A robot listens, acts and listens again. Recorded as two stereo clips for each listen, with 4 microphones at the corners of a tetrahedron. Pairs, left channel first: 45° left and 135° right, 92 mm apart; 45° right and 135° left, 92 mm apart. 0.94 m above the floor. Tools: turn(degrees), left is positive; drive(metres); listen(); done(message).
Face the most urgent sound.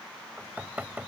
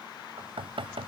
listen()
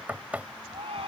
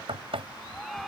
turn(degrees=-130)
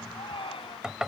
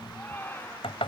turn(degrees=25)
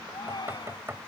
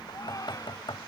done("Facing the shout.")